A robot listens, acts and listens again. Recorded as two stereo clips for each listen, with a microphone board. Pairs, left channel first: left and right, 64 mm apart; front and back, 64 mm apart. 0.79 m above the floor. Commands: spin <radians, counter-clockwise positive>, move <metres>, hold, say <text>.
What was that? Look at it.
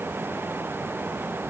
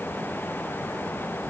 hold
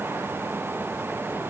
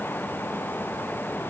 hold
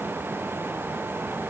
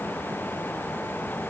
say I can't make out anything to turn to.